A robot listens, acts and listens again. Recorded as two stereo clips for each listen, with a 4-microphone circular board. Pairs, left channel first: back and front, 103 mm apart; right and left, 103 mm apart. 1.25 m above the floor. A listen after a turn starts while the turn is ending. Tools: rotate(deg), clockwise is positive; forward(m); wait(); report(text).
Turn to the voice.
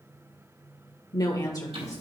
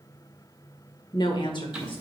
rotate(120)
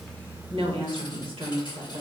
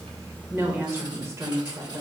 rotate(-35)
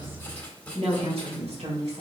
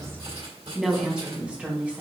rotate(-15)
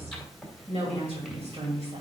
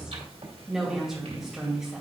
report("Found it: a woman speaking, straight ahead.")